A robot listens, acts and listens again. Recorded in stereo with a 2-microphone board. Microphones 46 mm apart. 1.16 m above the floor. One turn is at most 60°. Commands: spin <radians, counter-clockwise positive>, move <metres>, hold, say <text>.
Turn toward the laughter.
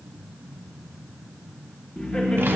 spin 0.44
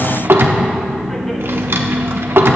spin 0.35
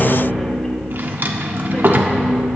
spin 0.61
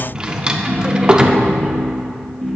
say Facing the laughter.